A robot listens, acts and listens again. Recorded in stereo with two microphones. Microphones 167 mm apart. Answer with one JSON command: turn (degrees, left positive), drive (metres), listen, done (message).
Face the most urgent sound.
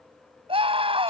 {"turn": -35}
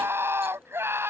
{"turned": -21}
{"turn": -15}
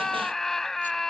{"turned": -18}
{"done": "Facing the scream."}